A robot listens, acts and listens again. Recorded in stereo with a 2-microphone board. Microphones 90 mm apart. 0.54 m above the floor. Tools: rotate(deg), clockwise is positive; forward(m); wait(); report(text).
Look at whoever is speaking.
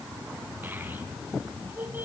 rotate(20)
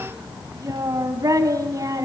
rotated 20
rotate(140)
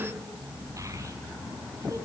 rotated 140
wait()
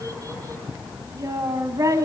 rotate(40)
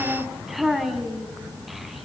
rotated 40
report("Facing the child speaking, 2 to 4 m away.")